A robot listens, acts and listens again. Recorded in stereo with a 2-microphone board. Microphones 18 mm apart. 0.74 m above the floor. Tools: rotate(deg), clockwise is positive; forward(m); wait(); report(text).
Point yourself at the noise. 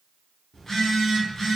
rotate(-35)
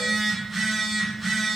rotate(-10)
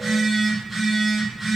report("Found it: a phone buzzing, straight ahead.")